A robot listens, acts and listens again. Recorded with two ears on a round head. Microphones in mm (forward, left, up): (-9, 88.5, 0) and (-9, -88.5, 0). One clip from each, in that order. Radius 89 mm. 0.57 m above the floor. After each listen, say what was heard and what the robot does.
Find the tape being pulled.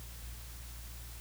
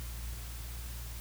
Keep listening.
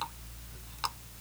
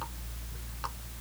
Keep listening.
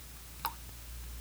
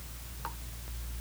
I can't make out tape being pulled, only a running tap.